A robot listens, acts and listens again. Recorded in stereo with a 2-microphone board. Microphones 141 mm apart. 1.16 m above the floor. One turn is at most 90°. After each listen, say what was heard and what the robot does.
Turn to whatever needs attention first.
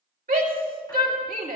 Turn 90° right.
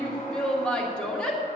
Found it: a shout, straight ahead.